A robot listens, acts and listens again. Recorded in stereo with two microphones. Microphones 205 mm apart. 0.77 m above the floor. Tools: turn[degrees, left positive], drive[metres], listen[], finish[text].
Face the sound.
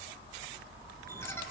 Action: listen[]
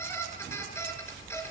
Action: turn[30]
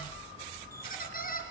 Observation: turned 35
Thought: So it is at 135° left.
Action: turn[135]
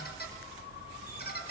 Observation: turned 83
Thought: The squeak is now 50° left.
Action: turn[50]
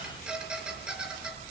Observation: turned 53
Action: finish[Facing the squeak.]